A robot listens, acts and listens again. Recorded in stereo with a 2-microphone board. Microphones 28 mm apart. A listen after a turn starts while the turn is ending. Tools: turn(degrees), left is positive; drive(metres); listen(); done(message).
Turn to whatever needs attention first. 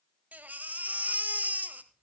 turn(degrees=-70)
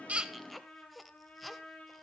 done("Found it: a baby crying, straight ahead, 1 to 2 m away.")